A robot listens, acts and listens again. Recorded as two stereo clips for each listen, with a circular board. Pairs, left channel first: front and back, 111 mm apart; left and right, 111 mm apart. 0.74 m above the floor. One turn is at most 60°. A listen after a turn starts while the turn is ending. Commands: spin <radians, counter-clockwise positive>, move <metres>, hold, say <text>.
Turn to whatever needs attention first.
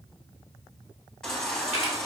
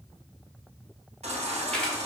spin -1.05
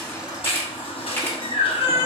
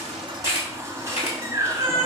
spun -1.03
spin -0.44
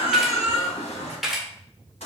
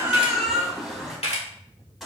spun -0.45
say Found it: a baby crying, straight ahead, 2 to 4 m away.